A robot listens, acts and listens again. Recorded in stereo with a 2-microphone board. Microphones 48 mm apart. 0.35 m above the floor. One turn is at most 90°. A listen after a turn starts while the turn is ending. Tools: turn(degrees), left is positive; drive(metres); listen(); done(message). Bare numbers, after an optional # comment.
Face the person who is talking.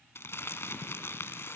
listen()
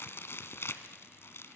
listen()
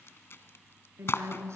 turn(-90)
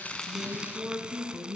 # So it is at 10° right.
turn(-10)
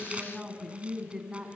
# The woman speaking is now 10° right.
turn(-10)
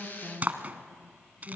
done("Facing the woman speaking, 2 to 4 m away.")